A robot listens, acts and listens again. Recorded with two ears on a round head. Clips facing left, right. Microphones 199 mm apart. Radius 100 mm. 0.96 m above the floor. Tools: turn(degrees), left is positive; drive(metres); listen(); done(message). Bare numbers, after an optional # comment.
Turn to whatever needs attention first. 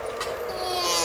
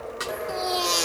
# The baby crying: about 15° right or 165° right.
turn(-15)
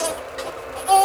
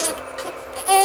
# So it is at 150° right.
turn(-150)
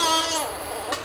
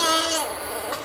done("Facing the baby crying, 1 to 2 m away.")